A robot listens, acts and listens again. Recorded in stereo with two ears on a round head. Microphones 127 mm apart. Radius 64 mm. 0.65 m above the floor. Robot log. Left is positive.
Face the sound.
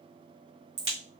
note: The crack: about 45° right or 135° right.
cmd yaw -45
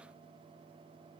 cmd idle
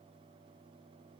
end: I heard a crack, but can't make it out now. It was about straight ahead or 90° right.